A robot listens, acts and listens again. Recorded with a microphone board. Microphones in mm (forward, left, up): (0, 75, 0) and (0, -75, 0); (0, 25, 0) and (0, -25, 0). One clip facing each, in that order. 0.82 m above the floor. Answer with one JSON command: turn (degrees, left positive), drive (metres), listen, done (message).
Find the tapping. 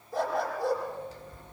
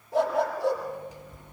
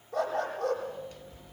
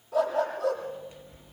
{"turn": -40}
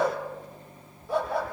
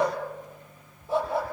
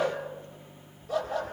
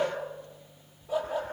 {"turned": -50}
{"listen": true}
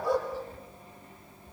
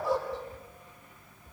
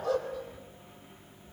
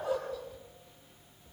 {"turn": -90}
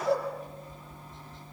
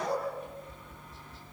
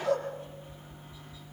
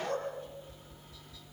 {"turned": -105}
{"turn": 20}
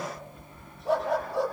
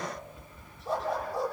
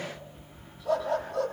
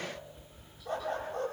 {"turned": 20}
{"done": "Facing the tapping, over 4 m away."}